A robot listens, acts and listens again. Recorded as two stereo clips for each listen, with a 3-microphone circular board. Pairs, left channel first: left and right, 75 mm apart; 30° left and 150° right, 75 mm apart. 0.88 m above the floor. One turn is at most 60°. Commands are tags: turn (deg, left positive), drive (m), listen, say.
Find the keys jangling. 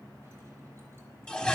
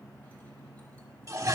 <listen/>
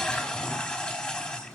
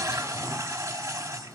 <listen/>
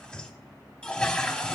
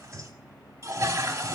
<say>I can't make out keys jangling to turn to.</say>